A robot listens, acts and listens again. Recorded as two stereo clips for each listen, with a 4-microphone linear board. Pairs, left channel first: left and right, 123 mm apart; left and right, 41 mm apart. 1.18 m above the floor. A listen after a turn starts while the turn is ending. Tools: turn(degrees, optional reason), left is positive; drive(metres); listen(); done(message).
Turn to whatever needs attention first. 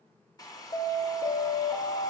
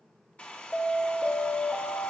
turn(degrees=65, reason="The alarm: about 65° left or 115° left.")
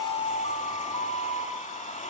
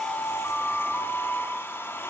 turn(degrees=50, reason="So it is at 50° left.")
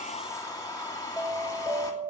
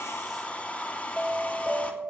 done("Facing the alarm.")